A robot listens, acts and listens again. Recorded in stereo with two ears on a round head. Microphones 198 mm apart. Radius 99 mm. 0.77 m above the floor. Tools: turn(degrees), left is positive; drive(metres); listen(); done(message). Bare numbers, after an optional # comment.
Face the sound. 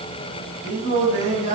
# The singing: about 35° right or 145° right.
turn(-35)
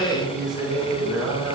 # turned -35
# So it is at 10° right.
turn(-10)
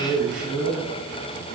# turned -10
# The singing is now 10° right.
turn(-10)
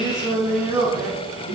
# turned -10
# The singing is now 15° right.
turn(-15)
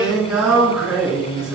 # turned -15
done("Facing the singing.")